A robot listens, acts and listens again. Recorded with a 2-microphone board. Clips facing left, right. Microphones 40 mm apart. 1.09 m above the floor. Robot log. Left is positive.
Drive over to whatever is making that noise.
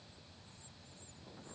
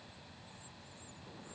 cmd idle
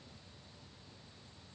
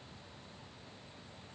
cmd idle
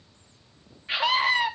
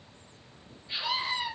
note: The scream: about 70° left or 110° left.
cmd yaw +70
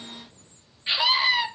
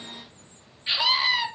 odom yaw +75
cmd fwd 1.0
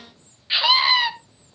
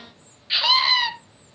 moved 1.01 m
note: The scream is now 10° left.
cmd yaw +10
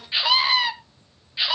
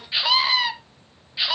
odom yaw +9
cmd fwd 1.0
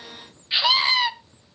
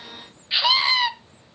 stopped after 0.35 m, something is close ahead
end: Arrived at the scream, straight ahead.